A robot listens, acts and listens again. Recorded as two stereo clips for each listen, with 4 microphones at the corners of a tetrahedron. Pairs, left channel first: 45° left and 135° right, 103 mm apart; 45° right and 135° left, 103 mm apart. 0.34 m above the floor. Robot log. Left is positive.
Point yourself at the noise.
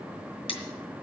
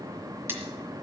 note: The cutlery clinking: 70° left.
cmd yaw +70
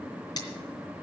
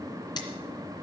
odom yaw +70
end: Found it: cutlery clinking, straight ahead, 2 to 4 m away.